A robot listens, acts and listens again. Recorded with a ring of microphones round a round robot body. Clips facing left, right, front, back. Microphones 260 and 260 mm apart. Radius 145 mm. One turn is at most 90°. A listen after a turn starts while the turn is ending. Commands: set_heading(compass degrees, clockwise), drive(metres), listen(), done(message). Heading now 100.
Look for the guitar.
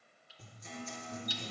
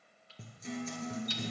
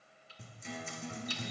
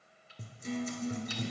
set_heading(190)
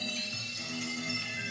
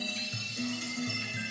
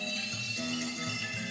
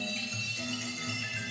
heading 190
set_heading(235)
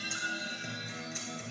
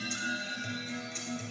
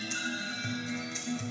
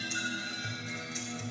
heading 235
set_heading(225)
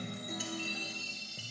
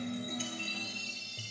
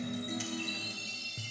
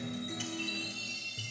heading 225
done("Found it: a guitar, straight ahead.")